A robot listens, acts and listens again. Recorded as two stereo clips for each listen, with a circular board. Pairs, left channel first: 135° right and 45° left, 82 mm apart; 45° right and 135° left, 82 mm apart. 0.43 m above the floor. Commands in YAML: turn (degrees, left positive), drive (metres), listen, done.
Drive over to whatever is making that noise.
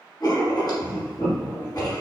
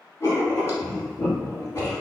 turn: -105
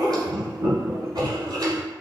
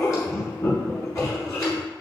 drive: 1.0
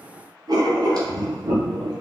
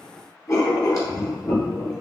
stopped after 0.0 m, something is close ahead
done: "Blocked. The writing is further on, straight ahead."